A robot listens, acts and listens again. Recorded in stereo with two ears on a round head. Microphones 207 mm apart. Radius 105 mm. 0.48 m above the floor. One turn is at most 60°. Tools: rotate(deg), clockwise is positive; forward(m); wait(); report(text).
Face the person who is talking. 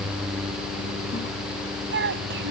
rotate(55)
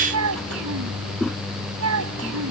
rotate(60)
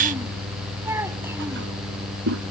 rotate(10)
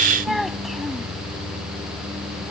report("Found it: a child speaking, straight ahead.")